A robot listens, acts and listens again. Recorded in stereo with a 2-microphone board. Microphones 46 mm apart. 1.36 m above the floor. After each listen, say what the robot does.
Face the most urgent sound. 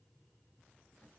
Keep listening.
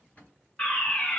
Turn 25° left.
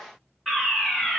Found it: a fire alarm, straight ahead.